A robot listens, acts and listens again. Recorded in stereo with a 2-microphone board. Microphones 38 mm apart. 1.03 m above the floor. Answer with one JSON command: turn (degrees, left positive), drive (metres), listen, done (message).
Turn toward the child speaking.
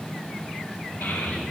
{"turn": 90}
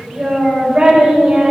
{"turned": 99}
{"turn": -35}
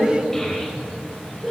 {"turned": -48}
{"done": "Facing the child speaking."}